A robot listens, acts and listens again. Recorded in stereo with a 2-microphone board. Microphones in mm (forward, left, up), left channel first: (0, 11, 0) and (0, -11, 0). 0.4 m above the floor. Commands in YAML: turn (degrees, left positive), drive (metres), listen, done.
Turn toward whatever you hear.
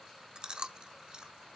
turn: -45
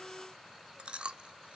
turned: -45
turn: -75
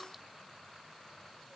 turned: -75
listen: true
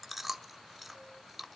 done: "Facing the chewing, 1 to 2 m away."